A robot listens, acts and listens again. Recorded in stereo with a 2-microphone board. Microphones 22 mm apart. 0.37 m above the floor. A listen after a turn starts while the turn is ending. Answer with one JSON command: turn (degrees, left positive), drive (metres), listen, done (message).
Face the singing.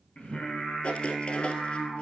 {"turn": 65}
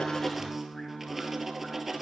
{"turn": 20}
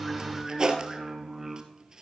{"done": "Found it: singing, straight ahead."}